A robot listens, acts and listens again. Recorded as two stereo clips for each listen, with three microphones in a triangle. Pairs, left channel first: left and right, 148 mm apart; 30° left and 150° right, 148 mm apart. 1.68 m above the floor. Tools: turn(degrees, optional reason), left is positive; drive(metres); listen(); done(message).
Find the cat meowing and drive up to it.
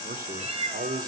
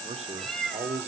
turn(degrees=-55, reason="The cat meowing: 55° right.")
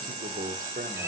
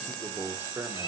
listen()
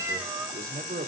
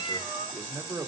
turn(degrees=-20, reason="The cat meowing is now 20° right.")
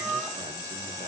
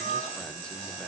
drive(metres=1.0)
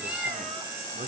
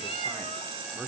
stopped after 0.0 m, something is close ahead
turn(degrees=-10, reason="The cat meowing is now 10° right.")
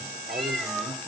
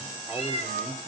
done("Something is in my way. I am facing the cat meowing but have not reached it.")